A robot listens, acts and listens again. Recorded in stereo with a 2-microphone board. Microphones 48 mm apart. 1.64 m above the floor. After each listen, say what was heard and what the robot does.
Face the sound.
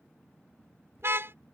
The car horn: about 60° right or 120° right. Turn 60° right.
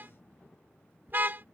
So it is at 50° right. Turn 50° right.
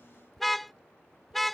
Found it: a car horn, straight ahead.